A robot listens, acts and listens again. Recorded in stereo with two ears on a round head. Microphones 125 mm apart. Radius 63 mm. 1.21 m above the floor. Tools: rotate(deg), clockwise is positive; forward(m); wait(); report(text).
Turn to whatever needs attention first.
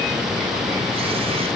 wait()
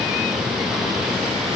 wait()
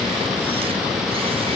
report("I can't make out anything urgent to turn to.")